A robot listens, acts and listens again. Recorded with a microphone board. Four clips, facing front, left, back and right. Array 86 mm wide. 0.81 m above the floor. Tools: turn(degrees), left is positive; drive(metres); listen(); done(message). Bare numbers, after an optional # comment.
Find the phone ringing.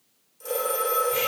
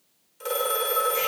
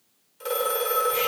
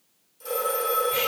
# The phone ringing: 130° left.
turn(130)
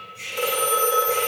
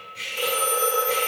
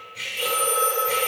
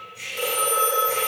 done("Found it: a phone ringing, straight ahead, 1 to 2 m away.")